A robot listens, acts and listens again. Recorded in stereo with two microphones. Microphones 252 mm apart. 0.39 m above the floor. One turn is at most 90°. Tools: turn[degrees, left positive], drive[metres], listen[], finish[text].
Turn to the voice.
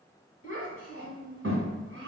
Thought: The child speaking: about 55° right or 125° right.
Action: turn[-55]
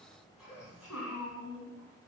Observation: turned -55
Action: finish[Found it: a child speaking, straight ahead.]